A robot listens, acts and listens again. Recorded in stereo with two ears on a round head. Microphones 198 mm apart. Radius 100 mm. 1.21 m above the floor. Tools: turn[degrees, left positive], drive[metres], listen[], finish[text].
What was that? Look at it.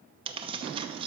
Thought: The tearing paper: about 25° right or 155° right.
Action: turn[-25]
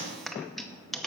Action: finish[Found it: tearing paper, straight ahead, under 1 m away.]